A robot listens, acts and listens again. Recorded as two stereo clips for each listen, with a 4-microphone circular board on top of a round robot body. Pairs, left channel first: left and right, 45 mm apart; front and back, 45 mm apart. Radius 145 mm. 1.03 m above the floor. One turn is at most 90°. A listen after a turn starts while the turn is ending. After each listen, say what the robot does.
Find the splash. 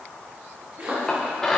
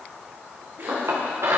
Turn 90° right.
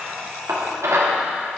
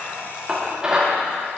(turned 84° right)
Turn 55° right.
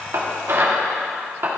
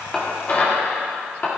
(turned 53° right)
Facing where the splash came from. I can't hear it now.